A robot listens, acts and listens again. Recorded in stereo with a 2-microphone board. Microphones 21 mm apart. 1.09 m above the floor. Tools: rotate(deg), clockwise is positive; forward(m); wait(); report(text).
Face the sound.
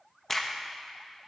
rotate(-20)
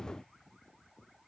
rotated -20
wait()
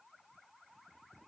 report("I heard a crack, but can't make it out now. It was about straight ahead or 140° left.")